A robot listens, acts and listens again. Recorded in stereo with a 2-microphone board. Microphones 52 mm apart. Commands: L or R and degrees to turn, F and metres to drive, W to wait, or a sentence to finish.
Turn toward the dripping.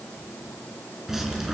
R30
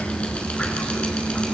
L20
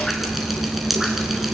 Facing the dripping.